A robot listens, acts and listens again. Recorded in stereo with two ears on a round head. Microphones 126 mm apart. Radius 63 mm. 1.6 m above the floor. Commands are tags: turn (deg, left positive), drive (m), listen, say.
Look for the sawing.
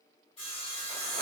<turn deg="40"/>
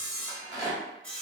<say>Found it: sawing, straight ahead.</say>